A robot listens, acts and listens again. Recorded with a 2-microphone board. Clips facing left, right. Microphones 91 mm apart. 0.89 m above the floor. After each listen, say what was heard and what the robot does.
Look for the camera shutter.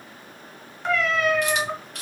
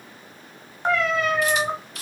The camera shutter: about 65° left or 115° left. Turn 65° left.
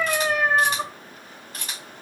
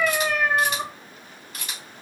So it is at 40° left. Turn 40° left.
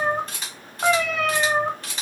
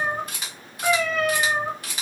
The camera shutter is now 10° right. Turn 10° right.
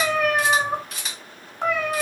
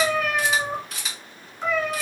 Found it: a camera shutter, straight ahead.